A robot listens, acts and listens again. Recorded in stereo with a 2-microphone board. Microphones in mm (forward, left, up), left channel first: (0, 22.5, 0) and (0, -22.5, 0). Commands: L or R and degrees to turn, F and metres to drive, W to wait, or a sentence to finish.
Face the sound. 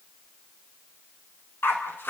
L50
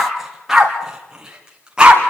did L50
R20
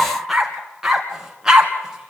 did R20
R15
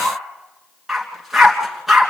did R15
Found it: a dog barking, straight ahead, 2 to 4 m away.